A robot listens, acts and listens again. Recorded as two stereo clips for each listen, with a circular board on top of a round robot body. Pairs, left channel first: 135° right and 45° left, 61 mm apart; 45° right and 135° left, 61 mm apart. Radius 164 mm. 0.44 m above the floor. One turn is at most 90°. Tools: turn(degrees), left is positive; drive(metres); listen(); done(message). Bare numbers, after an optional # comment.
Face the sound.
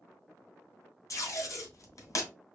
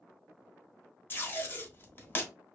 # The tape being pulled: 100° right.
turn(-90)
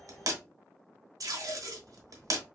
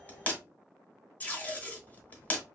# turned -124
# The tape being pulled is now 20° left.
turn(20)
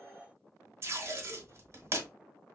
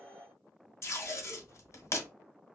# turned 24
done("Found it: tape being pulled, straight ahead, under 1 m away.")